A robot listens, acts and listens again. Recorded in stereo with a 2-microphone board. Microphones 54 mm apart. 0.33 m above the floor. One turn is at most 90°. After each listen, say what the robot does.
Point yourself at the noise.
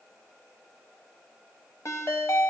Turn 60° left.
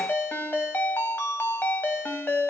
Turn 45° left.
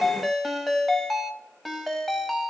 Facing the ringtone, under 1 m away.